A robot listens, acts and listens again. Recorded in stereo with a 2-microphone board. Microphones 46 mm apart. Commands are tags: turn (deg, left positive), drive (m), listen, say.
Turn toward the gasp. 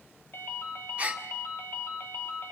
<turn deg="-30"/>
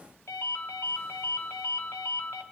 <listen/>
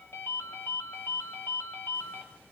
<say>I heard a gasp, but can't make it out now. It was about straight ahead or 120° right.</say>